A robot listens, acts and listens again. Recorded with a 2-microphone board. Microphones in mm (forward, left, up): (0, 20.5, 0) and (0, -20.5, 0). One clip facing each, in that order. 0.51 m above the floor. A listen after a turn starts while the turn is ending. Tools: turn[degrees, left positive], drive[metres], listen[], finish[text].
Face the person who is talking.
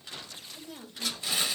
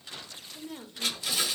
Thought: The woman speaking: about 30° right or 150° right.
Action: turn[-30]
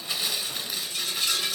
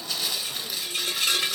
Action: listen[]
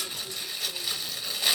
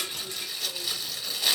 Action: listen[]
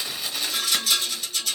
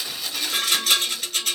Action: finish[I heard a woman speaking, but can't make it out now. It was about straight ahead or 120° right.]